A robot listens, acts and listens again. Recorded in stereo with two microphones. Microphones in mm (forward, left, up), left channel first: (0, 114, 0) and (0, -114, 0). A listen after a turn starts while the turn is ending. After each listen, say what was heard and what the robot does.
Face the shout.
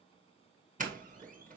Keep listening.
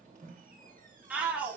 Turn 30° right.
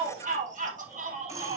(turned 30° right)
So it is at 145° right. Turn 145° right.
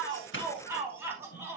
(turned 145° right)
The shout is now 10° right. Turn 10° right.
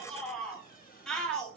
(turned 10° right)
Found it: a shout, straight ahead.